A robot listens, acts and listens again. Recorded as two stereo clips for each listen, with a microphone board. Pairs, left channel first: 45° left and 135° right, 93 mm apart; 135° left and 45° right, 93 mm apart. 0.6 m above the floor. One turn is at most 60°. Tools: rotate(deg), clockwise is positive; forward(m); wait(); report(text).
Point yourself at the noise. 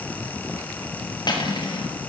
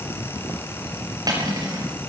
report("Facing the cutlery clinking, over 4 m away.")